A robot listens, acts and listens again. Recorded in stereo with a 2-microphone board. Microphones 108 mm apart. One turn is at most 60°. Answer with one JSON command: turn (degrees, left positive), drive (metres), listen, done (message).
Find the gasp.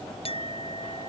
{"listen": true}
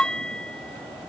{"listen": true}
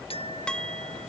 {"done": "I can't make out a gasp to turn to."}